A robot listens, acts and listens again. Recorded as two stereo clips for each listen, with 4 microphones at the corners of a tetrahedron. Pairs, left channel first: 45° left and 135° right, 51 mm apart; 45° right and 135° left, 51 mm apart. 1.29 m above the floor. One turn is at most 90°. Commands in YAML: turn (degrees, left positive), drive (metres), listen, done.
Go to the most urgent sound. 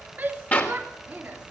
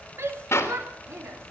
turn: 90
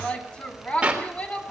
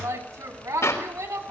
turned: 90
turn: 90
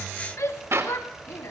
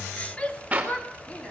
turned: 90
turn: 20
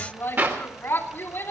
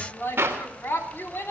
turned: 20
drive: 1.0
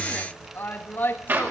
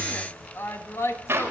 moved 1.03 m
drive: 1.0
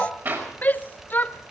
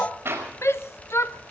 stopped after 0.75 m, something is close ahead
turn: -10
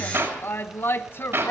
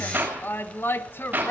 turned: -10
done: "I am next to the shout."